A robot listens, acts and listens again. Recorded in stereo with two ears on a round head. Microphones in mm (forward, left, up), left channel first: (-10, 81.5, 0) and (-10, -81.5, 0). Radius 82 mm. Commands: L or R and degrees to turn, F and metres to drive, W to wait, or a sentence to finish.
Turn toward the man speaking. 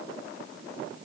W
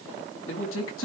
L90
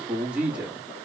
Facing the man speaking.